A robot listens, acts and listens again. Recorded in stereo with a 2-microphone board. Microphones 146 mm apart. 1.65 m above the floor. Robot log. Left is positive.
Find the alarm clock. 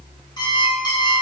note: The alarm clock: about 30° left or 150° left.
cmd yaw +30
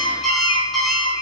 end: Found it: an alarm clock, straight ahead, 2 to 4 m away.